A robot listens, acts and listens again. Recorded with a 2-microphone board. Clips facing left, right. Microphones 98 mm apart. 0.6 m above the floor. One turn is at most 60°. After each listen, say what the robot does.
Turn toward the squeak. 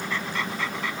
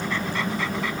Keep listening.
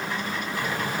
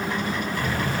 Turn 15° left.
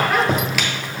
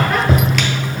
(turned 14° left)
Facing the squeak, 1 to 2 m away.